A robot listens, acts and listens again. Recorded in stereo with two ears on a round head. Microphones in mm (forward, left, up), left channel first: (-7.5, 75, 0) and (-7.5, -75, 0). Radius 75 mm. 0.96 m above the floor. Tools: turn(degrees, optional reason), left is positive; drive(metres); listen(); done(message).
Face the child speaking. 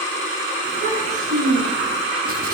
turn(degrees=-55, reason="The child speaking: about 55° right or 125° right.")
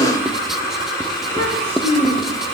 turn(degrees=-55, reason="So it is at 55° right.")
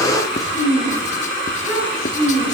done("Facing the child speaking.")